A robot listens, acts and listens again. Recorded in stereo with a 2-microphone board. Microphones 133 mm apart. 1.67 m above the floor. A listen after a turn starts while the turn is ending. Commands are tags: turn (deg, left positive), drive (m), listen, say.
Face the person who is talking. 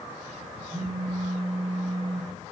<listen/>
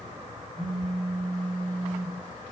<listen/>
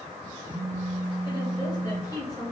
<turn deg="25"/>
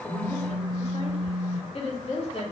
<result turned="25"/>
<turn deg="130"/>
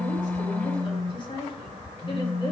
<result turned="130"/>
<turn deg="35"/>
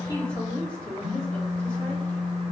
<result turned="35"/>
<turn deg="10"/>
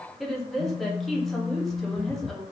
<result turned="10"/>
<say>Facing the woman speaking.</say>